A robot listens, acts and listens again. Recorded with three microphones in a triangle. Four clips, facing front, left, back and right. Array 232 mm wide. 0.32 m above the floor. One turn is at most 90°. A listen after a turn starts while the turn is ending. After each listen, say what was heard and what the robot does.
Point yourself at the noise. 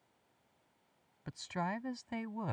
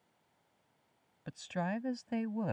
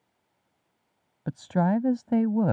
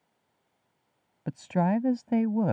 The woman speaking: 140° right. Turn 90° right.
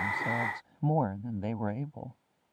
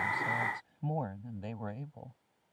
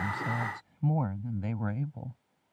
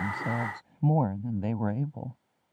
The woman speaking is now 65° right. Turn 65° right.
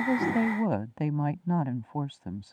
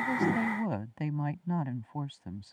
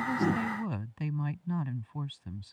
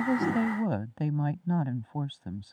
The woman speaking is now 10° right. Turn 10° right.
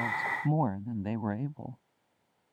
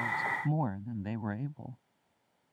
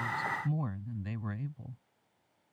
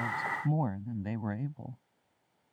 Found it: a woman speaking, straight ahead.